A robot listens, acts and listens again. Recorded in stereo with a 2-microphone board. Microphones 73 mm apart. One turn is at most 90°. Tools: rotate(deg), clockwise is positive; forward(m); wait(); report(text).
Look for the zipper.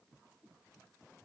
wait()
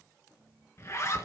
rotate(-40)
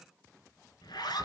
rotate(-90)
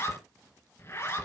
rotate(-35)
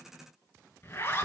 rotate(-30)
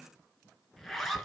report("Found it: a zipper, straight ahead, 2 to 4 m away.")